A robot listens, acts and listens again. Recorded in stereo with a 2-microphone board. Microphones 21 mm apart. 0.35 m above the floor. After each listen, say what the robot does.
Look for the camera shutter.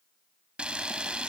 Turn 65° right.
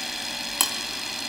Turn 15° right.
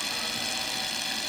Facing the camera shutter, 1 to 2 m away.